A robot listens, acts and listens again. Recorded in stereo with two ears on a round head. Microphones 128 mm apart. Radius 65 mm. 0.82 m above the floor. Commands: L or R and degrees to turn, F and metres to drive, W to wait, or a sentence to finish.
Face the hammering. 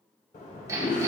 R25
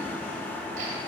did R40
W
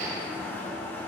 R115
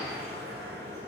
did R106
R10
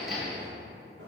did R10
Found it: hammering, straight ahead.